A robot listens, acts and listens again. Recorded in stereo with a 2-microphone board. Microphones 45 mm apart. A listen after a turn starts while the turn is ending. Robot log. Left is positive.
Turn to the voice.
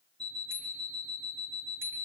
cmd idle
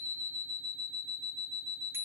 cmd idle
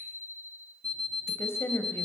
note: The woman speaking: about 70° left or 110° left.
cmd yaw +70
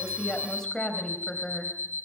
note: So it is at 10° left.
cmd yaw +10
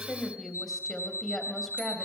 end: Facing the woman speaking.